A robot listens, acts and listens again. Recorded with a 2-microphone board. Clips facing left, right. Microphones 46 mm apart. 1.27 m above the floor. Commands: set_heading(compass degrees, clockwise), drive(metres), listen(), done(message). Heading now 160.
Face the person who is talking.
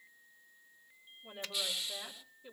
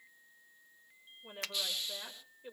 set_heading(205)
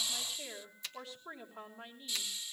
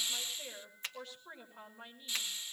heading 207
done("Found it: a woman speaking, straight ahead.")